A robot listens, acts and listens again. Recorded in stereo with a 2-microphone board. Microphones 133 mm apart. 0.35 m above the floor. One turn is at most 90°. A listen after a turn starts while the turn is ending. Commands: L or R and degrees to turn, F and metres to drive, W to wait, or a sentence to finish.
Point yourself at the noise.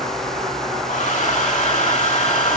L90
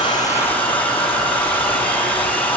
L15
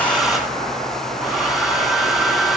Facing the hair dryer.